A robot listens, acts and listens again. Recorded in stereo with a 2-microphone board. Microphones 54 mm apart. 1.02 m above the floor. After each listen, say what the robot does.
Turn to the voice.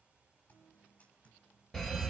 Keep listening.
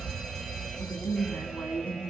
Turn 90° left.
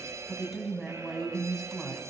Facing the woman speaking, over 4 m away.